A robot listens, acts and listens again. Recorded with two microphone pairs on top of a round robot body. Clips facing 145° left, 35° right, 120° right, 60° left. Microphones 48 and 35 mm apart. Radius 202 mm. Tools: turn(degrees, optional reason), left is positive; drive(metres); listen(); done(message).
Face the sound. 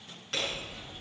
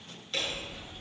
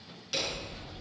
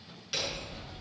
turn(degrees=145, reason="The hammering: 145° left.")
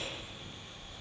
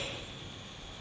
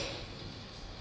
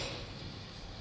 turn(degrees=-25, reason="The hammering is now 25° right.")
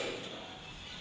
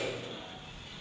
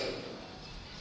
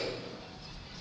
turn(degrees=-15, reason="The hammering is now 15° right.")
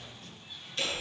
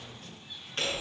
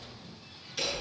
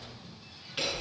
done("Facing the hammering, over 4 m away.")